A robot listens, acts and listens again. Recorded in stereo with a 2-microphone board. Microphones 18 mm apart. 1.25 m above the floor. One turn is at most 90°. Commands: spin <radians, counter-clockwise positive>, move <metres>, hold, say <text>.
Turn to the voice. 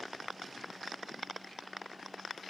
hold
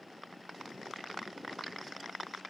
hold
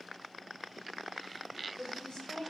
spin 0.87
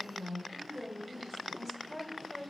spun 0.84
say Facing the woman speaking, 1 to 2 m away.